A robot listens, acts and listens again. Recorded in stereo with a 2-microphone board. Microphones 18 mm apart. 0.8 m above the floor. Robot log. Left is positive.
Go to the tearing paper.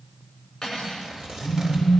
note: The tearing paper: about 50° right or 130° right.
cmd yaw -50
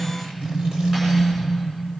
cmd idle
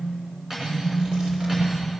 cmd idle
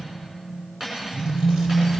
end: I heard tearing paper, but can't make it out now. It was about straight ahead or 80° right. I did not reach it.